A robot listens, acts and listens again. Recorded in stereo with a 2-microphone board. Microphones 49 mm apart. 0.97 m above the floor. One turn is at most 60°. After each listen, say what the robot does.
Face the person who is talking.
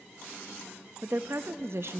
Turn 60° right.
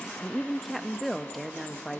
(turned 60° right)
Found it: a woman speaking, straight ahead, under 1 m away.